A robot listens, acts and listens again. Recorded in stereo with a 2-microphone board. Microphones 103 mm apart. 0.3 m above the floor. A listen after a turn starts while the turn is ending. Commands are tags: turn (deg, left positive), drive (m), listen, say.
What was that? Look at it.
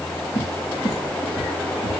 <turn deg="65"/>
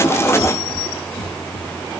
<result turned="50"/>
<turn deg="60"/>
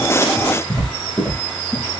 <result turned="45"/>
<turn deg="15"/>
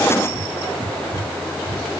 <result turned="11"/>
<say>Facing the cupboard door, over 4 m away.</say>